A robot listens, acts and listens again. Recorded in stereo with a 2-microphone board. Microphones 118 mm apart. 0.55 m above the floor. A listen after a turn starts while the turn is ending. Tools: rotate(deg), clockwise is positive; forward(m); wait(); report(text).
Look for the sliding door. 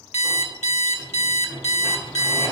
rotate(-20)
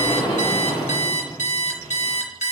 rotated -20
rotate(-135)
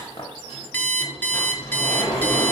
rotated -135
rotate(-65)
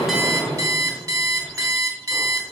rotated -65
rotate(-20)
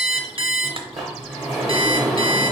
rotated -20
report("Found it: a sliding door, straight ahead.")